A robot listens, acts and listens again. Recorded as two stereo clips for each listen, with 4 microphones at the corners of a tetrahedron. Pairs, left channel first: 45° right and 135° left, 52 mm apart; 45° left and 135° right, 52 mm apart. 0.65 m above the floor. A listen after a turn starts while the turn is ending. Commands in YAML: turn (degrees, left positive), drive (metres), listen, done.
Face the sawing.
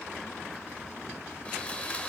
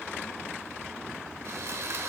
turn: -110
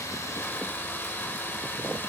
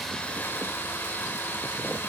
done: "Found it: sawing, straight ahead."